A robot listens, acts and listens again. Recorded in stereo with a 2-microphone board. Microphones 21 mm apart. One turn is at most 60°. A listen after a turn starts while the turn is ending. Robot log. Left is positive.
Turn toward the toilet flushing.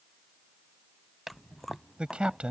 note: The toilet flushing: about 25° right or 155° right.
cmd yaw -25
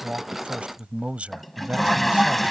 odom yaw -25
end: Found it: a toilet flushing, straight ahead.